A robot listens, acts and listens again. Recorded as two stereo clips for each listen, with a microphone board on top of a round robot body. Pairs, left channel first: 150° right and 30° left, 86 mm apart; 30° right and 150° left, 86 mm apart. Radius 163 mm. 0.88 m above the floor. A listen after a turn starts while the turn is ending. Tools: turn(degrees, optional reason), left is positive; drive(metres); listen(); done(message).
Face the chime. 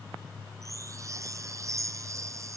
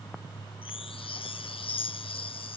turn(degrees=-25, reason="The chime: 25° right.")
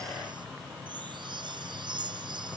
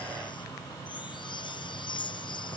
done("Facing the chime.")